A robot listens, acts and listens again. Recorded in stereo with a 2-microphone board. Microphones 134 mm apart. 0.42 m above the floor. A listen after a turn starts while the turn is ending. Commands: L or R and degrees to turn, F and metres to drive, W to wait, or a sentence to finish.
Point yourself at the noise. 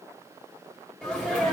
L30
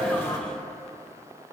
W
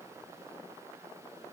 I heard a sneeze, but can't make it out now. It was about 25° right or 145° left.